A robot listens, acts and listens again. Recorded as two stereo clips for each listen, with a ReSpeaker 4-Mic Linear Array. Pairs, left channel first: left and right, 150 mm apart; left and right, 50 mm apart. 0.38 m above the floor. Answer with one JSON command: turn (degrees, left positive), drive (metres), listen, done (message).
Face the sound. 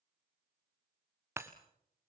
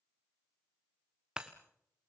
{"turn": -15}
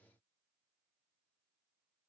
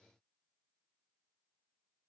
{"listen": true}
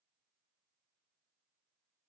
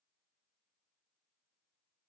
{"done": "I heard breaking glass, but can't make it out now. It was about straight ahead or 150° right."}